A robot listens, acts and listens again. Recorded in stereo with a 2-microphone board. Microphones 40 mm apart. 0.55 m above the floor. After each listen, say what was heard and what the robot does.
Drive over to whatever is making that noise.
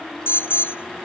Turn 90° left.
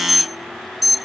Drive 1.0 m forward.
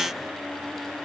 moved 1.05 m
Keep listening.
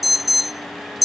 Drive 1.0 m forward.
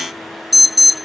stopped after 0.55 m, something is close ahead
I am next to the alarm.